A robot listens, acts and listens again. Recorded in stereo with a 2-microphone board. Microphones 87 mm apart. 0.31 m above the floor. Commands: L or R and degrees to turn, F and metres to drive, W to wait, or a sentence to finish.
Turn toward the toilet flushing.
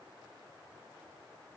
W
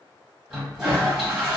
R30
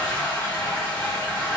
L20
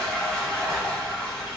Found it: a toilet flushing, straight ahead.